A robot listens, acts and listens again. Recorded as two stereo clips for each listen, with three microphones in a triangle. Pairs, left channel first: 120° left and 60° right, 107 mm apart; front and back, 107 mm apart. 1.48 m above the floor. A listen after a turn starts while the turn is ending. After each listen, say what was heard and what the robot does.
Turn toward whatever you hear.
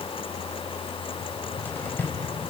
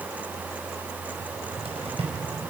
The cupboard door: 170° right. Turn 170° right.
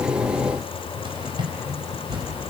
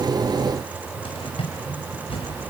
The cupboard door is now 20° right. Turn 20° right.
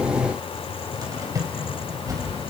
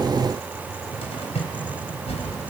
Facing the cupboard door.